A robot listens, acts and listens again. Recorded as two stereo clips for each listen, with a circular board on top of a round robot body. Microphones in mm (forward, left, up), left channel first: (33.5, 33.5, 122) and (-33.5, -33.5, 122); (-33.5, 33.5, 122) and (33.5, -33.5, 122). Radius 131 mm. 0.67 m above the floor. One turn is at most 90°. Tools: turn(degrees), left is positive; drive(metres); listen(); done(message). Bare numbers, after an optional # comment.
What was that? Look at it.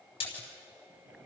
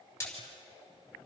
# The splash: 70° left.
turn(70)
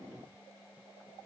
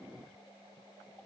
done("I heard a splash from this way, but can't make it out now.")